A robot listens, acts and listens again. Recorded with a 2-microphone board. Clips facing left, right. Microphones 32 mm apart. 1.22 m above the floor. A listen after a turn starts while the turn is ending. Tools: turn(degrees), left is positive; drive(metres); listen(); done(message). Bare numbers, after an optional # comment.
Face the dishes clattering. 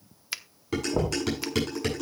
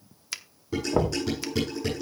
turn(90)
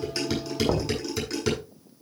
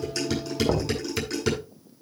done("Facing the dishes clattering.")